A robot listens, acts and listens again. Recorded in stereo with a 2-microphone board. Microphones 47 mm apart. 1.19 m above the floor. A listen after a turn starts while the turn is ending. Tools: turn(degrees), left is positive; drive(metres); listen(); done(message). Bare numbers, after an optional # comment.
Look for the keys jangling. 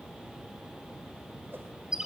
listen()
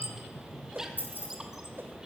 # The keys jangling: about 45° left or 135° left.
turn(45)
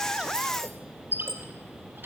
listen()
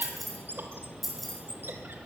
done("Facing the keys jangling.")